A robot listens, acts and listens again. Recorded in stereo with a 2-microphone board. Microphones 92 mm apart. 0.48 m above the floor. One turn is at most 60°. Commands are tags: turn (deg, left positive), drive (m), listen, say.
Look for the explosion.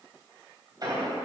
<turn deg="-45"/>
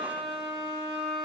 <listen/>
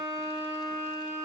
<say>I heard an explosion, but can't make it out now. It was about straight ahead or 90° right.</say>